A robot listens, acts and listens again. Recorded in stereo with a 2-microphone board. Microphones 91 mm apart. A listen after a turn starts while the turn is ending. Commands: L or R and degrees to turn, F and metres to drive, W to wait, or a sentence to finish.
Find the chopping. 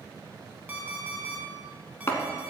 L30
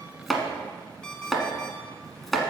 Found it: chopping, straight ahead, 1 to 2 m away.